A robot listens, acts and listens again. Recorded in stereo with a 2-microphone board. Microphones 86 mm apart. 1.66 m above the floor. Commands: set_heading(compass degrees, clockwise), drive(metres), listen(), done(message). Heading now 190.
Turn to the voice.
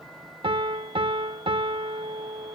listen()
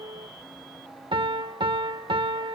listen()
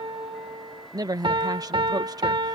set_heading(240)
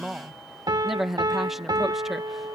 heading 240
done("Found it: a woman speaking, straight ahead.")